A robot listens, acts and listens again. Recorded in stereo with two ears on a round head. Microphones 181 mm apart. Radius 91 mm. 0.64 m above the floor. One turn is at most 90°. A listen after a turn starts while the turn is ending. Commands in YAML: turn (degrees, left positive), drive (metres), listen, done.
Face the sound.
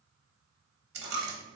turn: -55
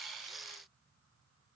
listen: true
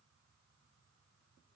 done: "I heard a dropped coin, but can't make it out now. It was about straight ahead or 70° right."